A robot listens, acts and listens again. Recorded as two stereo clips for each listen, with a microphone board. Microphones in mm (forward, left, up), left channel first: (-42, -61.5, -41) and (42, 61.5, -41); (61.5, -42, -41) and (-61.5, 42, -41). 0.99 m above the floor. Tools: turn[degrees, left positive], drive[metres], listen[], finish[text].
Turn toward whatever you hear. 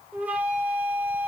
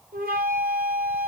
Thought: The flute: 135° left.
Action: turn[135]
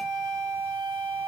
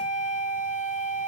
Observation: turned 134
Action: finish[Facing the flute, 2 to 4 m away.]